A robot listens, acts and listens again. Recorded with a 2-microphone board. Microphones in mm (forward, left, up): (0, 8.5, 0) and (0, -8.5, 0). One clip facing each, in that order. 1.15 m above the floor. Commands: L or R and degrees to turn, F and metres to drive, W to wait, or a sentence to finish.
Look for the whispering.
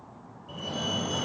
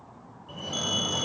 W
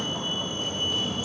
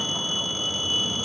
W
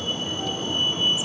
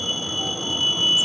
I can't make out whispering, only a fire alarm.